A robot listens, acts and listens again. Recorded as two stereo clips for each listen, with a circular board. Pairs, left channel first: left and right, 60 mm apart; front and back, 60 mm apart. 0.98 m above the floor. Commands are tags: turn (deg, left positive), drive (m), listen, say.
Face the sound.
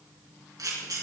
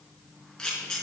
<turn deg="-80"/>
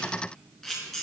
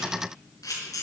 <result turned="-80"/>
<say>Found it: a camera shutter, straight ahead, over 4 m away.</say>